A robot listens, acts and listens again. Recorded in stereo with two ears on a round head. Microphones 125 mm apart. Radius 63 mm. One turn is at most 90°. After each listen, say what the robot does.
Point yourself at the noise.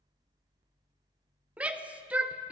Turn 30° right.
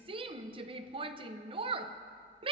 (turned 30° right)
Turn 90° right.
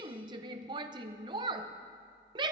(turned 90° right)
Turn 30° right.
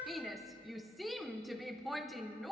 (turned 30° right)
Facing the shout, under 1 m away.